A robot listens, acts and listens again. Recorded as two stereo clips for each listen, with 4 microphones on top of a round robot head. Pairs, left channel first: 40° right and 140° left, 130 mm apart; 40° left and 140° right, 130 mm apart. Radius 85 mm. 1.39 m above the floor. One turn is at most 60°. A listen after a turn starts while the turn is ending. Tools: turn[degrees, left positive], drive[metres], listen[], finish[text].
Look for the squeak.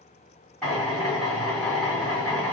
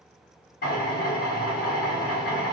Action: listen[]
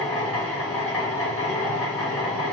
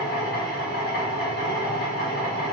Action: listen[]
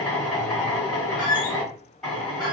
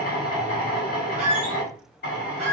Thought: The squeak: 105° right.
Action: turn[-60]
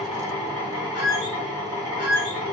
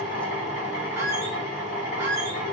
Thought: The squeak is now 70° right.
Action: turn[-60]
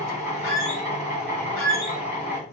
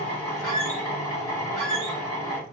Thought: The squeak is now 40° right.
Action: turn[-40]
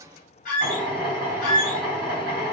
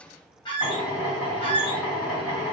Thought: The squeak is now 15° right.
Action: turn[-15]
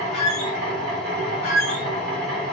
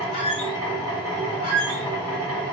Action: finish[Facing the squeak.]